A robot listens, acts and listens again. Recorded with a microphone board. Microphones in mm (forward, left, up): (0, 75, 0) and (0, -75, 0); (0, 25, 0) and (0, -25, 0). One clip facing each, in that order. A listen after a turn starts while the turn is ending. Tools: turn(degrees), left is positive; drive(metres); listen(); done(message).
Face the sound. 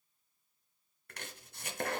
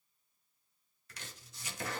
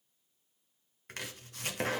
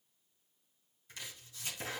turn(degrees=60)
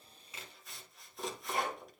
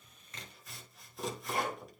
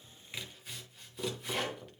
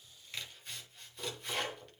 done("Found it: chopping, straight ahead.")